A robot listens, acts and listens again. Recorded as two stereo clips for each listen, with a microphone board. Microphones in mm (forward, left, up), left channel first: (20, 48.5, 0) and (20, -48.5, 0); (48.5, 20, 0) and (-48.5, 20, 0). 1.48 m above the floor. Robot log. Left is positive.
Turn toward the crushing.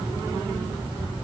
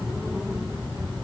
cmd idle
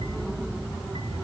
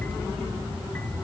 cmd idle
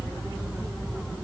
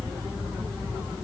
end: I can't make out crushing.